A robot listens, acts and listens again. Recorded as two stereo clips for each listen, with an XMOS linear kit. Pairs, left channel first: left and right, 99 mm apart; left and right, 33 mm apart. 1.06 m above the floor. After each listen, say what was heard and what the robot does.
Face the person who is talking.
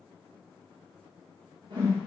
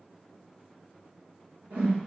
Keep listening.
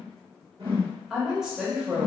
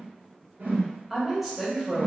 Turn 30° right.
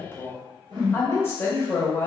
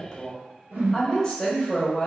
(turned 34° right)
So it is at 25° left. Turn 25° left.
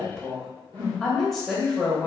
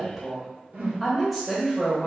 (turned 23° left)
Facing the woman speaking.